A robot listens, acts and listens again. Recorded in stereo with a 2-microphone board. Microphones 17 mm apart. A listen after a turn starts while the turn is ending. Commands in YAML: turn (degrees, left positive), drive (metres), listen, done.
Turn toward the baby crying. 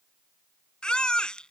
turn: 65
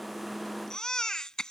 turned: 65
turn: 45
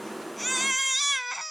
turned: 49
done: "Found it: a baby crying, straight ahead."